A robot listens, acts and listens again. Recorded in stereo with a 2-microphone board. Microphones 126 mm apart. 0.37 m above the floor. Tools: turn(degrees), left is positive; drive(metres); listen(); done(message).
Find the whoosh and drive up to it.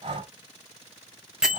listen()
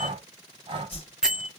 turn(degrees=50)
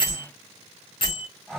turn(degrees=70)
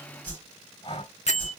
turn(degrees=15)
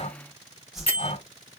drive(metres=1.0)
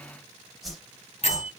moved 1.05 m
drive(metres=1.0)
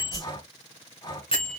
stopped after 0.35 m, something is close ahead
done("Arrived at the whoosh, straight ahead.")